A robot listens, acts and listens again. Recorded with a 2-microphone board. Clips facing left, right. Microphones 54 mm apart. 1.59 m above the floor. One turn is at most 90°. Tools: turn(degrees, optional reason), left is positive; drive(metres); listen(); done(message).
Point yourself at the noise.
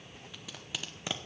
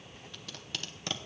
turn(degrees=30)
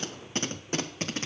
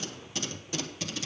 turn(degrees=90, reason="So it is at 135° left.")
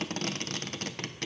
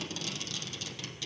turn(degrees=50, reason="The tape being pulled is now 50° left.")
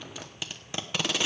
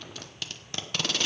turn(degrees=10, reason="The tape being pulled is now 10° left.")
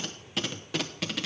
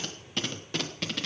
done("Facing the tape being pulled.")